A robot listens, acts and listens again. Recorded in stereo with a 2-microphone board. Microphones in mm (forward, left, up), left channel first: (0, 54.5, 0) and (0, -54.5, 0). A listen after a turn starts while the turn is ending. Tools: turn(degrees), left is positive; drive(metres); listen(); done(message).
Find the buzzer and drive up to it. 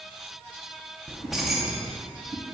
listen()
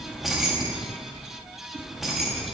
listen()
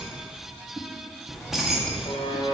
turn(degrees=50)
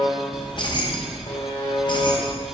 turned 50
turn(degrees=75)
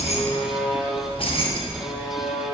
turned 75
drive(metres=1.0)
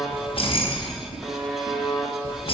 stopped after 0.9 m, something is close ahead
done("I am next to the buzzer.")